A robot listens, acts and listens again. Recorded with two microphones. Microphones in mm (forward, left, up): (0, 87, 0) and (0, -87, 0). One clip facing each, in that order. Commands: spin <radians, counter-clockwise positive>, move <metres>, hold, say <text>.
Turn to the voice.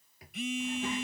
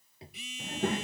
spin -0.96
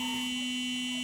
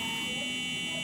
hold
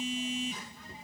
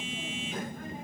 spin -1.13
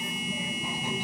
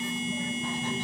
spin 0.17
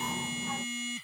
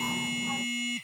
hold
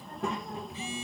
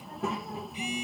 say Facing the child speaking.